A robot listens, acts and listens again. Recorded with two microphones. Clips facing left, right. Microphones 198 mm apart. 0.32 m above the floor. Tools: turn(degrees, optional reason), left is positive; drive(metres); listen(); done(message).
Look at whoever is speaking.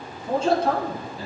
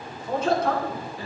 turn(degrees=30, reason="The man speaking: about 30° left or 150° left.")
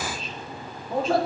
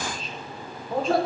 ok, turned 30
done("Facing the man speaking, 2 to 4 m away.")